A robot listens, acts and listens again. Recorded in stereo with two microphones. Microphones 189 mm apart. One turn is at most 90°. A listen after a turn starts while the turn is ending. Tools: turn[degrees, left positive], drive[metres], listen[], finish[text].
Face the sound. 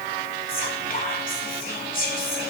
Thought: The whispering: about 50° left or 130° left.
Action: turn[50]
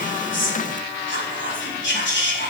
Thought: So it is at 80° left.
Action: turn[80]
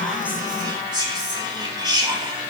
Thought: The whispering is now 25° right.
Action: turn[-25]
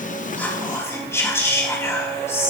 Thought: The whispering is now 15° left.
Action: turn[15]
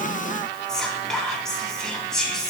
Action: finish[Found it: whispering, straight ahead, 2 to 4 m away.]